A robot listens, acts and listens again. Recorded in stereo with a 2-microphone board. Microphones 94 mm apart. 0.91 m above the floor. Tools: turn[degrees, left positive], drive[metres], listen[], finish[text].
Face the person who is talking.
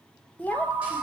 Thought: The child speaking: about 15° left or 165° left.
Action: turn[15]
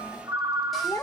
Thought: So it is at 150° left.
Action: turn[150]
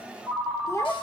Thought: The child speaking is now 40° left.
Action: turn[40]
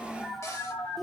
Action: finish[Found it: a child speaking, straight ahead.]